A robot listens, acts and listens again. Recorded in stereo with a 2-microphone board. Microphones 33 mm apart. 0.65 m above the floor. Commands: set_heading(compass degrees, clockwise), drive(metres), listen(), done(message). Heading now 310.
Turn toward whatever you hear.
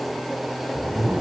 set_heading(20)
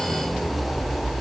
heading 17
done("Facing the zipper.")